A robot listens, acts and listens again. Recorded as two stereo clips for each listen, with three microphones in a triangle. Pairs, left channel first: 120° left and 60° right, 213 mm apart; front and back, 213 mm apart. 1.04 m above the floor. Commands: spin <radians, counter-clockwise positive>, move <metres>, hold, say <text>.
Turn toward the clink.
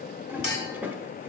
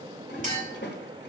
spin 2.27
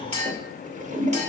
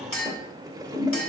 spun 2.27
say Found it: a clink, straight ahead, 2 to 4 m away.